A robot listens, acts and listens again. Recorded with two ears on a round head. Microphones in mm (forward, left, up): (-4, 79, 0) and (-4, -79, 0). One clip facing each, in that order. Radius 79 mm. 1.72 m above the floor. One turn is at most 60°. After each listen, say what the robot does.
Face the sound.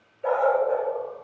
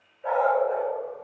Turn 60° left.
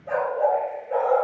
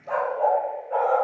Turn 30° left.
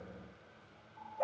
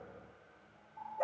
Facing the dog barking, 2 to 4 m away.